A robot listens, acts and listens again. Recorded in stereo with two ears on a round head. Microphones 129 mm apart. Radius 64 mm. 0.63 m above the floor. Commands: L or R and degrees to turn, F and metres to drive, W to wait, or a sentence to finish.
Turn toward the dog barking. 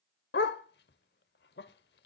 L90
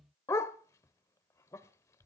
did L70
L20
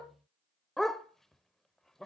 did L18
Facing the dog barking.